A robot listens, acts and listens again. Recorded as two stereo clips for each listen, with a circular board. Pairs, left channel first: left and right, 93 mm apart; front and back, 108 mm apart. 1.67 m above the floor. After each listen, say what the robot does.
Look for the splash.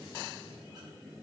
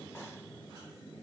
Keep listening.
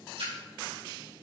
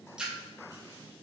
Turn 100° right.
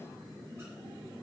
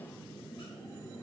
I heard a splash from this way, but can't make it out now.